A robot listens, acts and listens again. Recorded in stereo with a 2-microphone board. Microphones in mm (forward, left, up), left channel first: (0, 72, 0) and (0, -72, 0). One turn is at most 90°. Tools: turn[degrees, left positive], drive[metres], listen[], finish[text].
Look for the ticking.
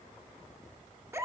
Action: listen[]
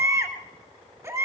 Action: listen[]
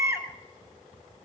Action: finish[I can't make out ticking, only a baby crying.]